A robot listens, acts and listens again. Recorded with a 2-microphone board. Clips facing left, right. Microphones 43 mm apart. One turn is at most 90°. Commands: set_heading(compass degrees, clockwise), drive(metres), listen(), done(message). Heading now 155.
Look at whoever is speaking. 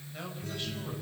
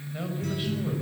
set_heading(185)
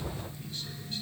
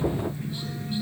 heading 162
listen()
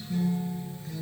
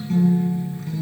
listen()
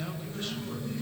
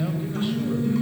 done("I heard a man speaking, but can't make it out now. It was about straight ahead or 165° right.")